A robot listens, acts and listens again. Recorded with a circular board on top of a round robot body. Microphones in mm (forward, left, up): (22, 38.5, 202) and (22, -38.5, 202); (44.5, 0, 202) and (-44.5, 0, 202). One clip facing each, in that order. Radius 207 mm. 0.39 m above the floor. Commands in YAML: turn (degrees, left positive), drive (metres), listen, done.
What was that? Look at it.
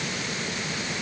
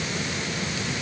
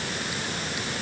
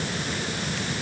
listen: true
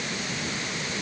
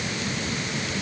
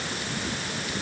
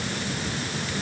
listen: true
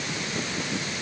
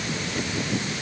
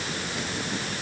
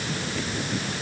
done: "I can't make out anything to turn to."